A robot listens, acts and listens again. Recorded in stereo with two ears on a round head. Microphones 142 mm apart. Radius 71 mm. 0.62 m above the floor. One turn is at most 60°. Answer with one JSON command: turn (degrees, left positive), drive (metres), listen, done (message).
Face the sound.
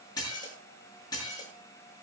{"turn": 25}
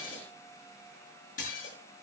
{"turn": 60}
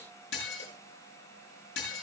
{"turn": 60}
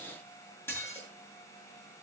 {"turn": 15}
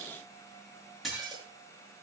{"done": "Facing the dishes clattering."}